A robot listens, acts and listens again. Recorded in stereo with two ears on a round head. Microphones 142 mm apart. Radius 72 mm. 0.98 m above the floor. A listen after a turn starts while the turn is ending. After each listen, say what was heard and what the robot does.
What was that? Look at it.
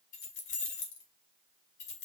The keys jangling: about 45° left or 135° left. Turn 45° left.
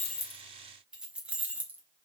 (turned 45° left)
So it is at 10° right. Turn 10° right.
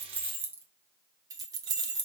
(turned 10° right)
The keys jangling is now 30° right. Turn 30° right.
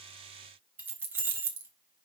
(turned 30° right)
The keys jangling is now 15° right. Turn 15° right.
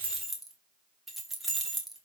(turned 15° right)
Found it: keys jangling, straight ahead.